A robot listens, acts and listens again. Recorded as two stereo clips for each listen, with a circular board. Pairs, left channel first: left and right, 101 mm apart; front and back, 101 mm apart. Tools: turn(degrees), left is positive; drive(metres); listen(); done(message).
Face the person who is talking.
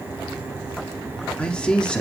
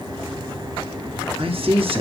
turn(degrees=170)
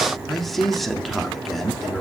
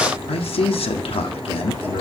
done("Facing the man speaking.")